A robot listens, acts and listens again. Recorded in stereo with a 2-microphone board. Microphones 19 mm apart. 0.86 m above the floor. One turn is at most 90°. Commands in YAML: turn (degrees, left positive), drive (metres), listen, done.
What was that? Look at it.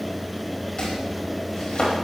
turn: 50
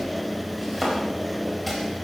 done: "Found it: chopping, straight ahead, over 4 m away."